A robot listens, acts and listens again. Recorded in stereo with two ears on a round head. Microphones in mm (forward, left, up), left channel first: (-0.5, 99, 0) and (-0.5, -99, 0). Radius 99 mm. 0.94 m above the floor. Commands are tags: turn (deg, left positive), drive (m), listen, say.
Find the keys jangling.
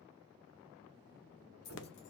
<turn deg="50"/>
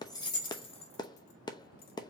<turn deg="25"/>
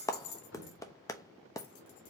<turn deg="50"/>
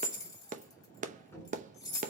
<turn deg="20"/>
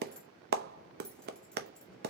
<listen/>
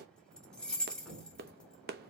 <say>Facing the keys jangling, 1 to 2 m away.</say>